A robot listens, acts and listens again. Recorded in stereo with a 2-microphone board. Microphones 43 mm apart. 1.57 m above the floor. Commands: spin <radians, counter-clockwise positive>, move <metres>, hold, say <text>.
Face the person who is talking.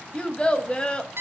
spin 0.35
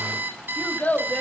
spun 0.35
spin 2.36
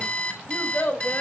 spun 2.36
spin 0.87
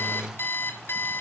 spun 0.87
hold
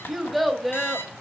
say Found it: a child speaking, straight ahead, 1 to 2 m away.